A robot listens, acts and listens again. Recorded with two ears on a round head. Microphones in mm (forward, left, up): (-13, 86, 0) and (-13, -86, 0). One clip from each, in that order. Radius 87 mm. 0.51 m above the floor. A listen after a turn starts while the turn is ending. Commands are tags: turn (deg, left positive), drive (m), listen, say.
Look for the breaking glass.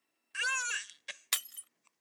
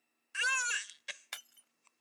<turn deg="75"/>
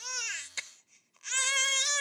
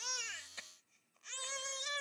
<listen/>
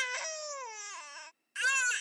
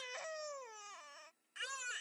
<say>I heard breaking glass, but can't make it out now. It was about straight ahead or 30° left.</say>